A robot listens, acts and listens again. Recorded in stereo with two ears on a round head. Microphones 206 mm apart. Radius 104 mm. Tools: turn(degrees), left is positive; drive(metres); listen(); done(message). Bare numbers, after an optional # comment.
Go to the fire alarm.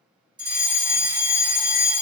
# The fire alarm: about 15° right or 165° right.
turn(-15)
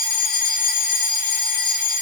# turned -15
drive(1.0)
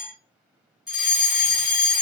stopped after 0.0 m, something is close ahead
done("Blocked. The fire alarm is further on, straight ahead.")